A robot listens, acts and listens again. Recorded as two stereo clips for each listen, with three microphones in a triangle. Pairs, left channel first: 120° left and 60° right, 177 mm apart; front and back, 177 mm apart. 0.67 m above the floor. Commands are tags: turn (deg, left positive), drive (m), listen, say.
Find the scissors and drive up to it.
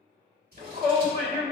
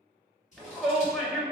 <turn deg="-40"/>
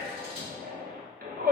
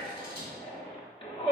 <listen/>
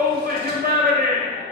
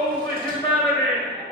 <listen/>
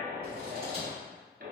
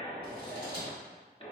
<say>I heard scissors from this way, but can't make it out now. I did not reach it.</say>